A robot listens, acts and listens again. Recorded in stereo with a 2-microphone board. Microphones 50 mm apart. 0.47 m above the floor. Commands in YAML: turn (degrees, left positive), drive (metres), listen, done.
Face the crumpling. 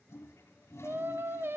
listen: true
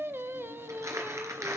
turn: -90
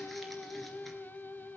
listen: true
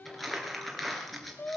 done: "Facing the crumpling, 2 to 4 m away."